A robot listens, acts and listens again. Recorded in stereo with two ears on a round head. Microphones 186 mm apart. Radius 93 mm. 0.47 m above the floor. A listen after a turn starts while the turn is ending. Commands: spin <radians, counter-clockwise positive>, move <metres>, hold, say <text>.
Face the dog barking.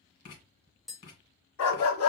spin 1.57
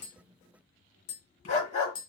spin 0.61
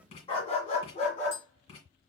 spin 0.61
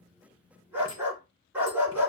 spin -0.17
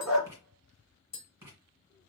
say Facing the dog barking, 2 to 4 m away.